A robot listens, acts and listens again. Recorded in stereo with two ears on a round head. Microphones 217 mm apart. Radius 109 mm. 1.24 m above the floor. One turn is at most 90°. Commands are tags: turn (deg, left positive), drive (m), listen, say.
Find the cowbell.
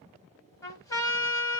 <listen/>
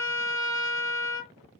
<listen/>
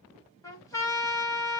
<say>I can't make out a cowbell to turn to.</say>